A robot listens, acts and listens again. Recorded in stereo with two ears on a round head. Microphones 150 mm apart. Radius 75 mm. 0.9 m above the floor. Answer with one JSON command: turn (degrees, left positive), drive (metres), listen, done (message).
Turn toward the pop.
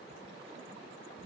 {"listen": true}
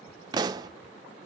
{"turn": -25}
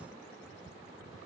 {"listen": true}
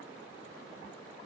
{"done": "I heard a pop, but can't make it out now. It was about straight ahead or 130° right."}